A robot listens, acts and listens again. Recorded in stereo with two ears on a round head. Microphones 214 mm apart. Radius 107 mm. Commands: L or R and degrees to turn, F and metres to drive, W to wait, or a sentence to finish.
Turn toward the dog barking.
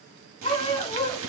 L25
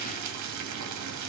W
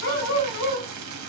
L130
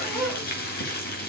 W
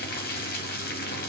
W
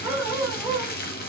Found it: a dog barking, straight ahead, 2 to 4 m away.